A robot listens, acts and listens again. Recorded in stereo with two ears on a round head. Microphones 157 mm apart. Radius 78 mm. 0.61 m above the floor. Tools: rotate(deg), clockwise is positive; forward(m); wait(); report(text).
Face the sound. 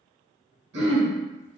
rotate(70)
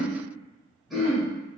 report("Facing the throat clearing, 1 to 2 m away.")